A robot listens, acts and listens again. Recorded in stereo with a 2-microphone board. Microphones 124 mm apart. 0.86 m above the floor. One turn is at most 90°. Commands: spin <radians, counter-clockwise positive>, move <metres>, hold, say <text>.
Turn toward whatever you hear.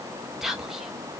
spin -0.52
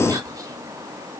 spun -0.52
spin -1.57
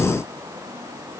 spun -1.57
spin -1.05
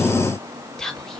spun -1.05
say Found it: whispering, straight ahead, 1 to 2 m away.